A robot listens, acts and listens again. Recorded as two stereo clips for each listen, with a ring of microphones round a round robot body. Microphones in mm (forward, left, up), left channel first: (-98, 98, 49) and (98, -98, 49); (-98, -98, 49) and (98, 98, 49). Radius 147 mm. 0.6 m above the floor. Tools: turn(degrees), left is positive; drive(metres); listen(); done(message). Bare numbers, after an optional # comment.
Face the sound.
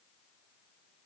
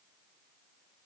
listen()
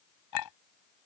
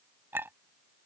# The clink: 125° left.
turn(125)
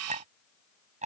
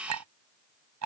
# The clink is now 20° left.
turn(20)
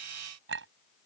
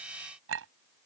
done("Found it: a clink, straight ahead.")